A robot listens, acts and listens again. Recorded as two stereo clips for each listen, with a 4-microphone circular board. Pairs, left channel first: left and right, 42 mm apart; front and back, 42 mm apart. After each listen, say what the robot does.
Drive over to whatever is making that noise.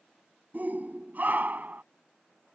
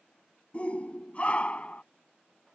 Turn 55° right.
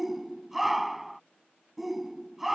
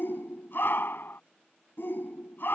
Drive 1.0 m forward.
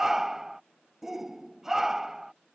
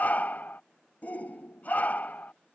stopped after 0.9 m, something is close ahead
Turn 15° right.
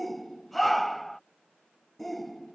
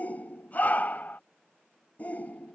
I am next to the shout.